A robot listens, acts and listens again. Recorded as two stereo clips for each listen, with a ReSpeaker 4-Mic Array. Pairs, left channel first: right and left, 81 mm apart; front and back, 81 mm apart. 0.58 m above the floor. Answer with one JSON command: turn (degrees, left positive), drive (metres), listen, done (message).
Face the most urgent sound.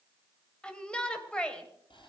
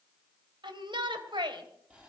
{"turn": -170}
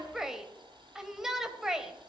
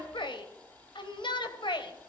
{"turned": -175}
{"done": "Facing the shout."}